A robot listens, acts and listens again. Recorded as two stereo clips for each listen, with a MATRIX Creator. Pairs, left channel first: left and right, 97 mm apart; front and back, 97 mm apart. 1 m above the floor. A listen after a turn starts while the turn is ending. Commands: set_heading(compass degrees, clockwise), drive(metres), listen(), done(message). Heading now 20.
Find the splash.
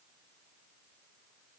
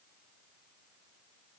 listen()
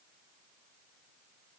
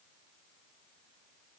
listen()
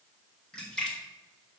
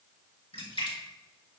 set_heading(10)
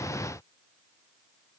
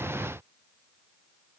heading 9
done("Facing where the splash came from. I can't hear it now.")